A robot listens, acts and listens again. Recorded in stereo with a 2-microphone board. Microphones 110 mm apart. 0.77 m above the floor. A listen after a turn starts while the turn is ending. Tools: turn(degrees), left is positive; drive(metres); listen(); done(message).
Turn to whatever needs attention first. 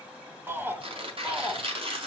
turn(degrees=-20)
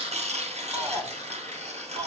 turn(degrees=-140)
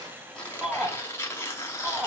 turn(degrees=-10)
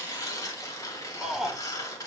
done("Facing the shout, 2 to 4 m away.")